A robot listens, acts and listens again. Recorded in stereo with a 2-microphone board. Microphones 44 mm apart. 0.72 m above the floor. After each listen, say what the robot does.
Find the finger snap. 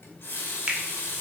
Turn 25° right.
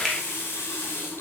Keep listening.
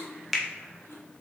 Facing the finger snap, 1 to 2 m away.